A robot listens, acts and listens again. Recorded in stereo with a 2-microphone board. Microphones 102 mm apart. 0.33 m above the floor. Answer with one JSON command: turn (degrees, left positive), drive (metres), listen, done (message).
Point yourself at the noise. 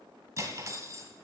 {"turn": -30}
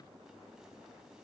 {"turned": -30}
{"listen": true}
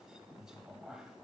{"done": "Found it: cutlery clinking, straight ahead, 1 to 2 m away."}